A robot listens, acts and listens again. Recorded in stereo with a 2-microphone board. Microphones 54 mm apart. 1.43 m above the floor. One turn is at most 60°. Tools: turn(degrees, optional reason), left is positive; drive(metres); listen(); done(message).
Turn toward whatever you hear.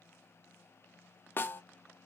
turn(degrees=40, reason="The snare drum: about 40° left or 140° left.")
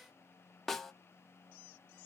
done("Facing the snare drum, under 1 m away.")